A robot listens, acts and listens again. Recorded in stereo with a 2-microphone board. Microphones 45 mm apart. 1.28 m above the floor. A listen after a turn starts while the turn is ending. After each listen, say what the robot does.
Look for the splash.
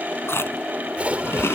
Turn 30° right.
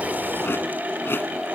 Keep listening.
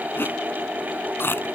I heard a splash, but can't make it out now. It was about straight ahead or 120° right.